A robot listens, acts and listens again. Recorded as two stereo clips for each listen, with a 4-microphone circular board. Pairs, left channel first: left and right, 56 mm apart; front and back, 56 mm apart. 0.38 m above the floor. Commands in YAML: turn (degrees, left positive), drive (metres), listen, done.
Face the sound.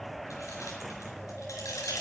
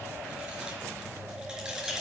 turn: 100
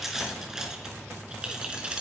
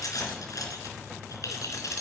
turn: -20
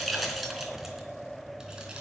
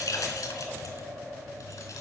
done: "Facing the keys jangling."